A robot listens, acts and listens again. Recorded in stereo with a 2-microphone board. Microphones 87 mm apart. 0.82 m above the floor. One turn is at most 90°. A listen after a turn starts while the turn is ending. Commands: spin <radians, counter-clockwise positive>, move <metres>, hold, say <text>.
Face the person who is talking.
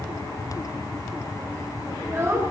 spin -0.52
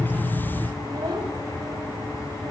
spin -1.57
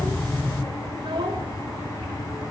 spin -1.40
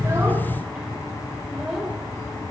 say Facing the child speaking, 2 to 4 m away.